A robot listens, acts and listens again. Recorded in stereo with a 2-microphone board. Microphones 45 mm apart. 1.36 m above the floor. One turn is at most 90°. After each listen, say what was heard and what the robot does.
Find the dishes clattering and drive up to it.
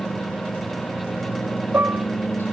Turn 90° right.
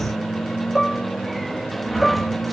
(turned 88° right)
Drive 1.0 m forward.
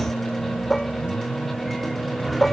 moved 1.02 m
Drive 1.0 m forward.
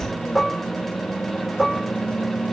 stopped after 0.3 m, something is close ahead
Blocked. The dishes clattering is further on, straight ahead.